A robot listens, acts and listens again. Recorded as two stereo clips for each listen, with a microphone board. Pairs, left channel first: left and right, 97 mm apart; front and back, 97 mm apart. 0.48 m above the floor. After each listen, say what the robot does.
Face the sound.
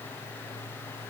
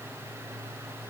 Keep listening.
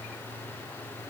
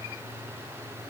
Keep listening.
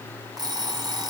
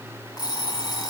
Turn 45° right.
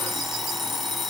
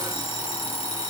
Found it: an alarm clock, straight ahead.